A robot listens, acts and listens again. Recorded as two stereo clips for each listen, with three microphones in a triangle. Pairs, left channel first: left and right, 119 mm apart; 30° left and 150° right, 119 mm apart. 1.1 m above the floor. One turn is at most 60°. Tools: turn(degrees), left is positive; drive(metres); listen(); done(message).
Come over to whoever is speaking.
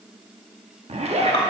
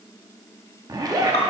listen()
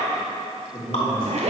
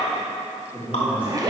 turn(degrees=60)
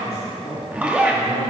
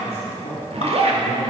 turn(degrees=60)
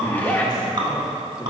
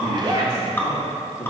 listen()
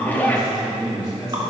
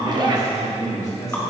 turn(degrees=35)
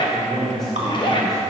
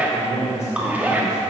drive(metres=1.0)
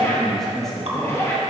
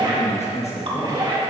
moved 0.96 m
drive(metres=1.0)
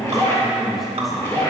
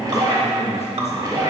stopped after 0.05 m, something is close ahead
done("I am next to the man speaking.")